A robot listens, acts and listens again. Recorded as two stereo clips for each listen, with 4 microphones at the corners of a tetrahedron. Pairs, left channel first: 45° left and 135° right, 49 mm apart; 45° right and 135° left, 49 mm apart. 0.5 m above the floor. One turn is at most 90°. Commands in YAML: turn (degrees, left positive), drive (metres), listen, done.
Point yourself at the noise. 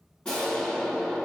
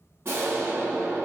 turn: 90
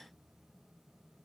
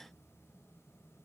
turn: 25
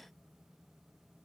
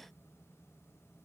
done: "I heard an explosion from this way, but can't make it out now."